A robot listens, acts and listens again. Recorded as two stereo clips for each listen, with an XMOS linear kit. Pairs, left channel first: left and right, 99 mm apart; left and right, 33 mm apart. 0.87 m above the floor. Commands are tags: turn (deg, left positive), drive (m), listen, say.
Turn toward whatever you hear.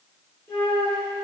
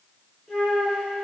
<turn deg="25"/>
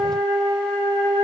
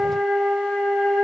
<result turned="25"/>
<say>Facing the flute, 2 to 4 m away.</say>